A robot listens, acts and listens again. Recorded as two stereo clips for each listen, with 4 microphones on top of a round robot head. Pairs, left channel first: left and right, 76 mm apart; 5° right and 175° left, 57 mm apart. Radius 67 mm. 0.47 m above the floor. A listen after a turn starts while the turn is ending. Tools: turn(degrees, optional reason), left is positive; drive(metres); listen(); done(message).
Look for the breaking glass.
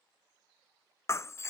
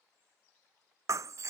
turn(degrees=140, reason="The breaking glass: 140° left.")
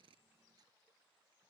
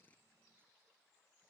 done("Facing where the breaking glass came from. I can't hear it now.")